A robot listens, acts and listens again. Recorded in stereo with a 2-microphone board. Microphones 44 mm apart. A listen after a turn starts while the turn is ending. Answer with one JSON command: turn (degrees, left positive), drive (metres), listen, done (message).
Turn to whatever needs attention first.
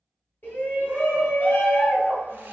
{"turn": 45}
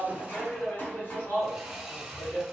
{"turn": 75}
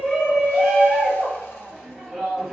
{"done": "Found it: a shout, straight ahead, 1 to 2 m away."}